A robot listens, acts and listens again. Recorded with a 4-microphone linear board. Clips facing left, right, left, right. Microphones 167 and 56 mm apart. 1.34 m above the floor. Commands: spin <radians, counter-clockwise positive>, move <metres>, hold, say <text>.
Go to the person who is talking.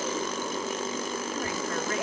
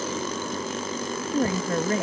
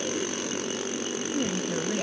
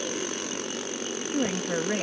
spin -0.70
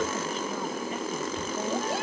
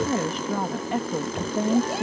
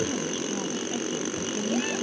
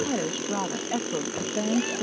spin -1.75
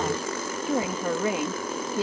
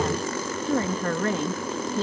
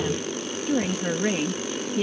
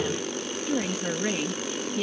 spin 0.17
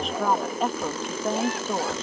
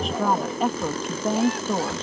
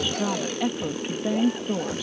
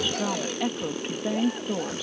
move 1.0
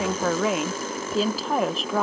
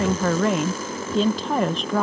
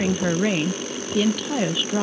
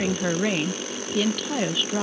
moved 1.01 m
move 1.0
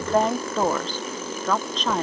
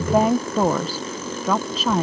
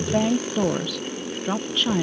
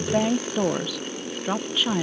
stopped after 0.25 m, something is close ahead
say Arrived at the woman speaking, straight ahead.